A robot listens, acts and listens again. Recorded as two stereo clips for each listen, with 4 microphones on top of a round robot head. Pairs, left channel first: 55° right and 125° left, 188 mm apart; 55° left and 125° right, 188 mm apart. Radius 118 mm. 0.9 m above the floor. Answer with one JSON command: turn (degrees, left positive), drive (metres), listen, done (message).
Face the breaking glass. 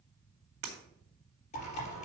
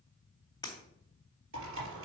{"turn": 125}
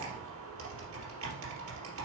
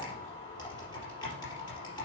{"done": "Facing where the breaking glass came from. I can't hear it now."}